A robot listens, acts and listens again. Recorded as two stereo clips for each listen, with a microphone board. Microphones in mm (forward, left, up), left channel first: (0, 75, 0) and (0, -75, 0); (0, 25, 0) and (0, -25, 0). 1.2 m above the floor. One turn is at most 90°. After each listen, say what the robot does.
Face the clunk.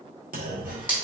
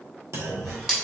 Turn 75° right.
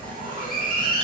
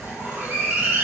Keep listening.
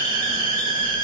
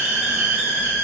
I heard a clunk, but can't make it out now. It was about straight ahead or 30° right.